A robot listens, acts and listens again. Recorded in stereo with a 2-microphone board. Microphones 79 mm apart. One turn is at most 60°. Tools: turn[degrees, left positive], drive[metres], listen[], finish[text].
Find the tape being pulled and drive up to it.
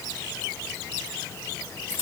Action: listen[]
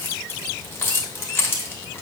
Action: listen[]
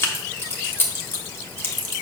Action: finish[I can't make out tape being pulled, only keys jangling.]